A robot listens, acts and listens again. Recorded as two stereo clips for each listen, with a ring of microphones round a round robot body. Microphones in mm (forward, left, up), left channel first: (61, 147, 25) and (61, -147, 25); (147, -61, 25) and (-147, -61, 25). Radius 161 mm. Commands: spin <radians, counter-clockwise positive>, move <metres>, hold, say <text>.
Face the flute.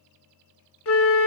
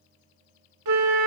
spin 2.44
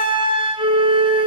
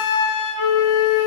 spin -0.26
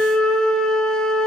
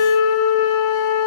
say Found it: a flute, straight ahead.